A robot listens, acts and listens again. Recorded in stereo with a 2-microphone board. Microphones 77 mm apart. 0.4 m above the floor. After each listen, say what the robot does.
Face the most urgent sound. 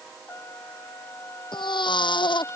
Turn 90° left.
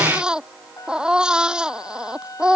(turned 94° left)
Turn 10° right.
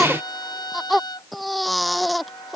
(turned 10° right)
Found it: a baby crying, straight ahead.